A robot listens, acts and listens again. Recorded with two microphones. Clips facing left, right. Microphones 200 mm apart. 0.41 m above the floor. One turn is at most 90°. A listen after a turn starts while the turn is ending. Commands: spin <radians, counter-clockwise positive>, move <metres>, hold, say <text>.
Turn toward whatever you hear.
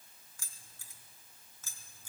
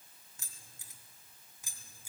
spin -0.52
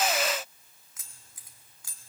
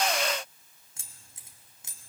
spin -0.35
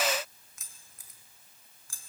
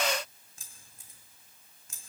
spin -0.35
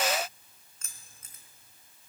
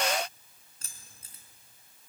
spin -1.57
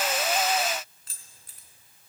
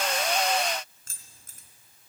spin -0.87
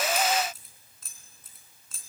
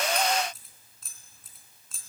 say Facing the keys jangling, 2 to 4 m away.